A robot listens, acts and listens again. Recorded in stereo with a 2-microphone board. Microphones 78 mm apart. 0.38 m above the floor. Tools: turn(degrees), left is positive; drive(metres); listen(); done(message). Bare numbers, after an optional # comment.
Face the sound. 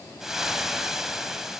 turn(-30)
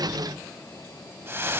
# So it is at 145° right.
turn(-145)
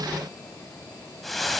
done("Facing the frying.")